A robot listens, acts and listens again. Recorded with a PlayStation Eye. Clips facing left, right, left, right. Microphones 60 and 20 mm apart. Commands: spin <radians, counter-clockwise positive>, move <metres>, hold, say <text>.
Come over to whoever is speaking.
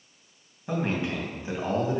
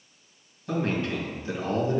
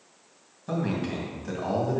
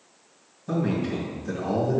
spin 0.35
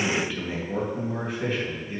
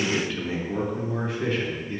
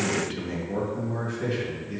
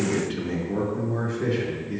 move 1.0
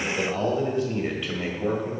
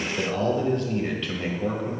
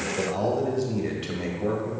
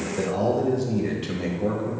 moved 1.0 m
spin 0.17
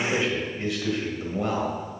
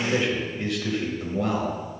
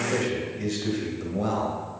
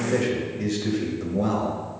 move 1.0
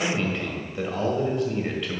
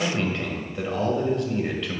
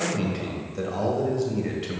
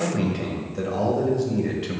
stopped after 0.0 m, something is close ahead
say Arrived at the man speaking, straight ahead.